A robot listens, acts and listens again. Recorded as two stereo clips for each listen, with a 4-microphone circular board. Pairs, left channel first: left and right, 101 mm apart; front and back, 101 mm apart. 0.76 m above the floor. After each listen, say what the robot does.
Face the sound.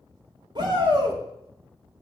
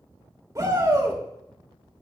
Turn 125° right.
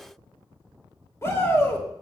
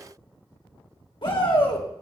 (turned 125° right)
Turn 30° left.
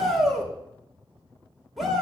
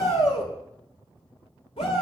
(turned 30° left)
Found it: a shout, straight ahead.